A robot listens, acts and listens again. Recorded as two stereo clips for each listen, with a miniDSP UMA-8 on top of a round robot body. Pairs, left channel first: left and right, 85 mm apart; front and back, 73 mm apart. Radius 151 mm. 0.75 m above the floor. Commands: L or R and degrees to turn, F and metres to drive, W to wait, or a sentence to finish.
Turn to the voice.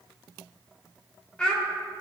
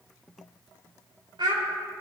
L170
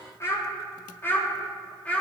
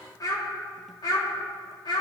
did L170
L15
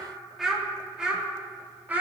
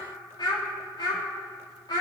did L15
R20
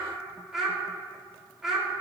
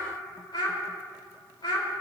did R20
Facing the child speaking, 2 to 4 m away.